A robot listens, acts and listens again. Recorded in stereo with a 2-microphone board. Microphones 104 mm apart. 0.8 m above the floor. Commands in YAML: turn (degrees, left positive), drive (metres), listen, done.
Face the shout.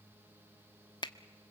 listen: true
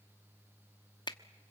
listen: true
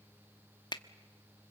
done: "I can't make out a shout to turn to."